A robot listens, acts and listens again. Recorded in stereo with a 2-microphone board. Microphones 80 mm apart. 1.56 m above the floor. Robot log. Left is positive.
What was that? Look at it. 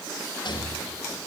cmd yaw +90
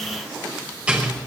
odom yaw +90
note: So it is at 15° right.
cmd yaw -15
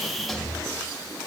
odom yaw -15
end: Facing the rattle.